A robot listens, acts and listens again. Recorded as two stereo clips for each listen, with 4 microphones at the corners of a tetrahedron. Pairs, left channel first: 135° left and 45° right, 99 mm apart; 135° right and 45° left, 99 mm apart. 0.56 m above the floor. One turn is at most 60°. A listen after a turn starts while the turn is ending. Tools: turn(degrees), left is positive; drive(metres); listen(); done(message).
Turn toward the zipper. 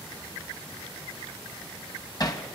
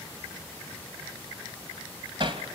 listen()
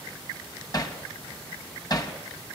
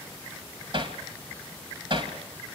listen()
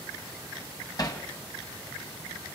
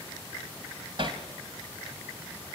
done("I can't make out a zipper, only hammering.")